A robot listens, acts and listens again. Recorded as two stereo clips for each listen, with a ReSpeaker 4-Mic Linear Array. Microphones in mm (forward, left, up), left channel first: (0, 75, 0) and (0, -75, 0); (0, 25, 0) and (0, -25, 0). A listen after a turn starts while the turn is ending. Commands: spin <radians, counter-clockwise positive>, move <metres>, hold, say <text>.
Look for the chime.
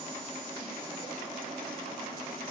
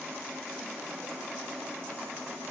hold
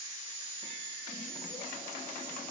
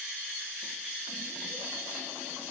hold
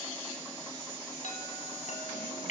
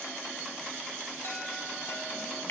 spin 0.87
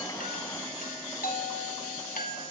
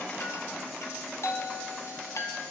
spin 1.31
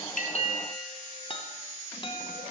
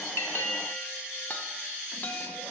spin 0.61
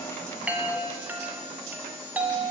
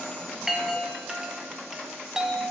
spin -0.26
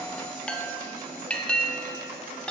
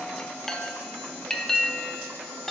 say Found it: a chime, straight ahead.